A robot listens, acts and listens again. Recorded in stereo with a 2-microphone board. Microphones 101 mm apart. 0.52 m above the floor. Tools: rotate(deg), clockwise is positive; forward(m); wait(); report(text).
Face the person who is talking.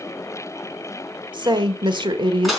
rotate(50)
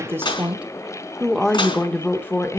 rotate(-25)
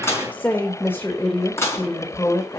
rotate(-25)
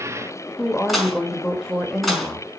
report("Found it: a woman speaking, straight ahead.")